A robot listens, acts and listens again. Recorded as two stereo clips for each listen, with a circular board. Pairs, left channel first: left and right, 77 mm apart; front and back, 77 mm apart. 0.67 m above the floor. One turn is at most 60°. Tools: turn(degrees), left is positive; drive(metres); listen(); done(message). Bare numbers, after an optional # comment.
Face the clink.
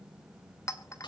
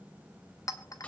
# The clink: 40° left.
turn(40)
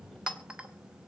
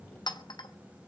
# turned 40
# The clink is now 15° right.
turn(-15)
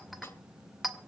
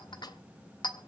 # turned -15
done("Facing the clink, 1 to 2 m away.")